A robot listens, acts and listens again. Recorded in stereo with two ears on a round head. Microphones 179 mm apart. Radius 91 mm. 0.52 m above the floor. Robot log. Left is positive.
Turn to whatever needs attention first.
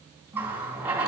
cmd idle
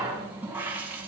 cmd idle
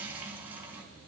end: I can't make out anything urgent to turn to.